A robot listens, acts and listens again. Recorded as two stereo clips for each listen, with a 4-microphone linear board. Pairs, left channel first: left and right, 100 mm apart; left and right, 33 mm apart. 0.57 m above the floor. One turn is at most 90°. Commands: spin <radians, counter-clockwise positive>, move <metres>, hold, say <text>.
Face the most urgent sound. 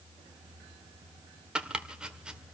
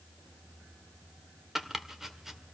hold
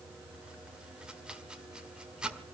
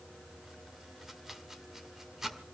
hold
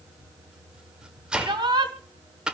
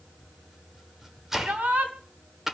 spin -0.87
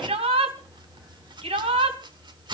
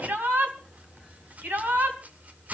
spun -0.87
spin -1.48
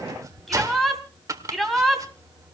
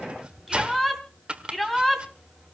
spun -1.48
say Found it: a shout, straight ahead, 2 to 4 m away.